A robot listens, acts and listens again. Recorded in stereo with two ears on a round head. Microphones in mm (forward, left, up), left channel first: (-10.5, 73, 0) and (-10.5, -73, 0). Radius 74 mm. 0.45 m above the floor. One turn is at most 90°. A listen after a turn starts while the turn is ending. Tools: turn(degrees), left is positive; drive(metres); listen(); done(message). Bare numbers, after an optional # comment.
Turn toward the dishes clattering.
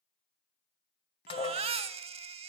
# The dishes clattering: about 35° left or 145° left.
turn(35)
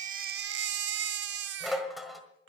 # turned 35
done("Found it: dishes clattering, straight ahead.")